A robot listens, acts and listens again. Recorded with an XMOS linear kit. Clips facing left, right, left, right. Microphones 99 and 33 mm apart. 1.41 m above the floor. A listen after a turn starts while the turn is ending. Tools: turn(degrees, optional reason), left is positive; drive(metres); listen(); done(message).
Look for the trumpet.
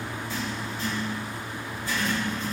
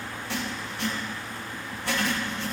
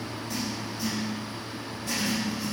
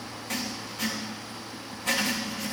listen()
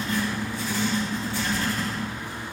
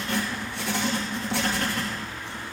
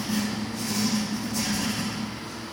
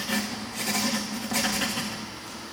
listen()
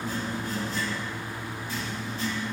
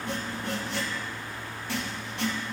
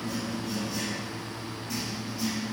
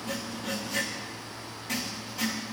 done("I can't make out a trumpet to turn to.")